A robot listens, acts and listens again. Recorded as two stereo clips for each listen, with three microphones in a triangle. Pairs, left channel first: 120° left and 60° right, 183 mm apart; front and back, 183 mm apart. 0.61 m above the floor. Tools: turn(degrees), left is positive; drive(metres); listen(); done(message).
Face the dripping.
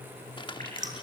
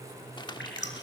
turn(degrees=-15)
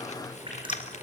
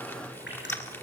done("Found it: dripping, straight ahead.")